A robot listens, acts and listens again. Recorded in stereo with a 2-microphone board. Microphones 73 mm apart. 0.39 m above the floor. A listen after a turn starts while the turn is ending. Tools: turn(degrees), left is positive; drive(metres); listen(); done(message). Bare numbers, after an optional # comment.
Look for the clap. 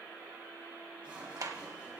# The clap: about 55° right or 125° right.
turn(-55)
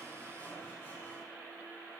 listen()
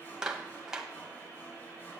# So it is at 10° right.
turn(-10)
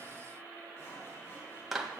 done("Facing the clap.")